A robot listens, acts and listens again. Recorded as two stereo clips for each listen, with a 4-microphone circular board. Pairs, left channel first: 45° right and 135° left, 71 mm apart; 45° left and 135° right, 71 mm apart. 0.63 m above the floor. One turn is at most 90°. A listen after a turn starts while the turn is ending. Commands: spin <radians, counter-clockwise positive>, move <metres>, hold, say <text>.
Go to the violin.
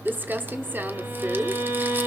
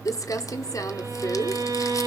spin -1.57
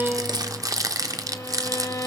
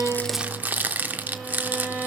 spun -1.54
spin -1.48
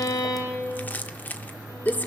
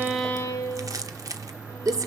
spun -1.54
move 1.0
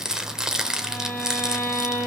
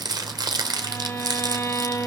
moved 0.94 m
move 1.0
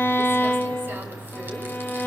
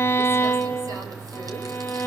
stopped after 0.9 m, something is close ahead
say Arrived at the violin, straight ahead.